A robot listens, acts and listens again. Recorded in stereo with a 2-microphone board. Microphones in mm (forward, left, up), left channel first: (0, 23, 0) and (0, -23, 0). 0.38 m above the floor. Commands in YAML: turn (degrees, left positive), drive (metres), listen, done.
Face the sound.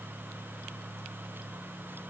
listen: true
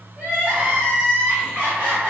turn: -35
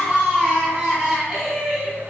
done: "Facing the crying, 1 to 2 m away."